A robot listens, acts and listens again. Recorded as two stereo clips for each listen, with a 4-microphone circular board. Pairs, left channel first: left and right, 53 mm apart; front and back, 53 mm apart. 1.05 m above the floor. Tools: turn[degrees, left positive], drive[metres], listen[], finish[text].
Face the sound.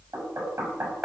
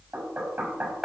Thought: The knocking: 125° right.
Action: turn[-125]
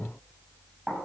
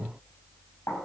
Action: finish[Facing the knocking, over 4 m away.]